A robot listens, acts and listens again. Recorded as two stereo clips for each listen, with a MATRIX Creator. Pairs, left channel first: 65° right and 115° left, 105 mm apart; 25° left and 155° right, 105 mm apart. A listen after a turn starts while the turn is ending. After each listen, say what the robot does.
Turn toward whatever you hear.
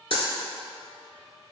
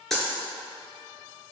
Turn 65° right.
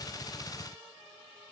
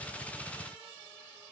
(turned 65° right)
I heard a dropped coin from this way, but can't make it out now.